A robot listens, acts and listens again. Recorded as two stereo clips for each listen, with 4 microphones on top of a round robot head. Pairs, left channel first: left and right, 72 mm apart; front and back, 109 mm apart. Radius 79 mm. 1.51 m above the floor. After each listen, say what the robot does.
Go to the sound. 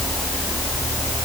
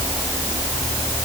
Keep listening.
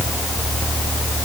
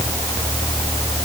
Keep listening.
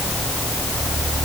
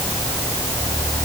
I can't make out anything to turn to.